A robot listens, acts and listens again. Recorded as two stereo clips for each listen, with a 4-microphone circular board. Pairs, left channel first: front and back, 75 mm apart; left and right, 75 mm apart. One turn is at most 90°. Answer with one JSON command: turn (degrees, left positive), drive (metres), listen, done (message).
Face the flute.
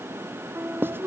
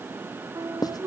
{"turn": -90}
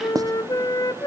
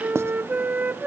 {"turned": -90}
{"turn": -25}
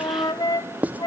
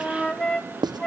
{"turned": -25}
{"turn": 10}
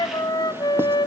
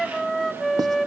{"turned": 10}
{"done": "Facing the flute, 1 to 2 m away."}